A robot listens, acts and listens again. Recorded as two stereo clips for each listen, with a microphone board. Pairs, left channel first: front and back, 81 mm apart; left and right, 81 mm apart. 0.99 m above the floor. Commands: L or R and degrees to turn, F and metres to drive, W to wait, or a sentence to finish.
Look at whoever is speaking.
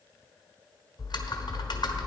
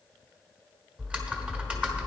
W
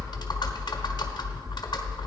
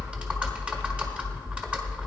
W
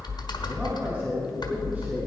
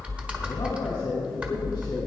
L115
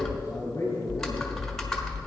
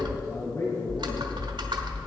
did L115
L50
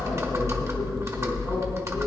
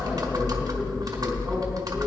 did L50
W
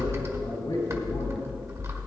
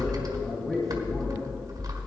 Facing the man speaking, 2 to 4 m away.